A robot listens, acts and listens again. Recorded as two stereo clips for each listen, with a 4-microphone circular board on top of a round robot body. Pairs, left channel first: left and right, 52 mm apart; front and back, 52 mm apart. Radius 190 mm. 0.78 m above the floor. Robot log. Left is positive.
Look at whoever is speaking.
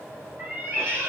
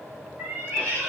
cmd idle
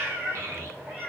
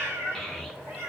note: The child speaking: 90° right.
cmd yaw -90
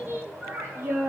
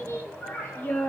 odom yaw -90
note: The child speaking is now 55° right.
cmd yaw -55
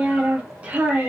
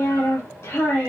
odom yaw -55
note: The child speaking is now 35° right.
cmd yaw -35
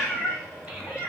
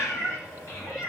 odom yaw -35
note: The child speaking is now 20° right.
cmd yaw -20
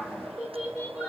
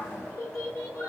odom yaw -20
note: The child speaking is now 10° right.
cmd yaw -10
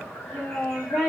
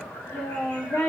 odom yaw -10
end: Found it: a child speaking, straight ahead.